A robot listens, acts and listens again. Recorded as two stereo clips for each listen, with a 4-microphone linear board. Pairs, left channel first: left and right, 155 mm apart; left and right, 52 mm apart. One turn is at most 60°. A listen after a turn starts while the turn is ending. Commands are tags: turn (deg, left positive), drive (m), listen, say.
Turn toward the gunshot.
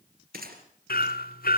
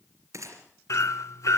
<turn deg="-60"/>
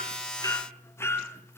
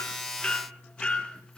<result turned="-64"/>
<turn deg="-25"/>
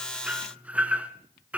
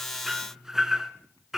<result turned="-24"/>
<say>Facing where the gunshot came from. I can't hear it now.</say>